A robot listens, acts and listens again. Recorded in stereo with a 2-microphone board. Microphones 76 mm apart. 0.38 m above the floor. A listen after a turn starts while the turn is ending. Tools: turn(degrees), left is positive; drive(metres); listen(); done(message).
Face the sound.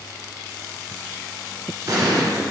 turn(degrees=-55)
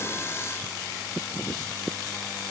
listen()
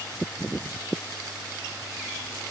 done("I heard an explosion, but can't make it out now. It was about straight ahead or 70° right.")